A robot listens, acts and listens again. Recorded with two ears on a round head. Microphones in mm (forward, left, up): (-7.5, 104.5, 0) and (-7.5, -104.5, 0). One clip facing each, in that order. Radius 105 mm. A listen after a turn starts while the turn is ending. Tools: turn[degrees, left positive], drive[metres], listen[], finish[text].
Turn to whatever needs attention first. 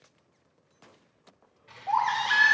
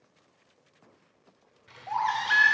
Action: turn[-30]
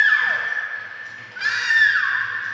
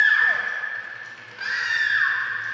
Thought: So it is at 25° left.
Action: turn[25]
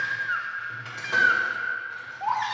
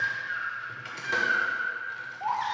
Thought: The baby crying is now 15° left.
Action: turn[15]
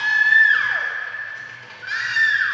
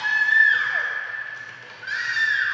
Action: finish[Found it: a baby crying, straight ahead, under 1 m away.]